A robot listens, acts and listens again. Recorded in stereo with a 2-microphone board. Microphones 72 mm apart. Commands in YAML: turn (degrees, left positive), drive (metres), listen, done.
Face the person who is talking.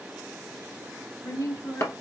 turn: 60
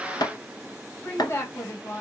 turn: 35
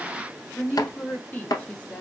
turn: 20
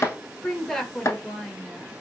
done: "Facing the woman speaking."